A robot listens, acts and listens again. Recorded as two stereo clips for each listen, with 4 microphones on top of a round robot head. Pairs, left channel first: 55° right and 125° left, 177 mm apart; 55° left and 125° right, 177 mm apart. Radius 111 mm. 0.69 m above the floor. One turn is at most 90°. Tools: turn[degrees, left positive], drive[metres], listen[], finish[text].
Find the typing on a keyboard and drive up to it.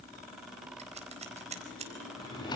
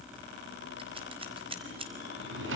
Action: listen[]
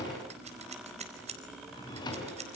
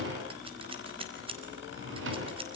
Action: listen[]
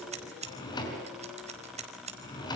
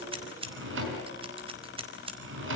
Action: finish[I can't make out typing on a keyboard to turn to.]